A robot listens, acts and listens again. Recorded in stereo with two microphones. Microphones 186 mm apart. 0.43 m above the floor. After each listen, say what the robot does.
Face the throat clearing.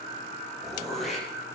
Turn 30° left.
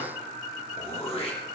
Turn 150° left.
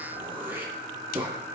Turn 10° right.
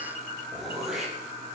Found it: throat clearing, straight ahead, over 4 m away.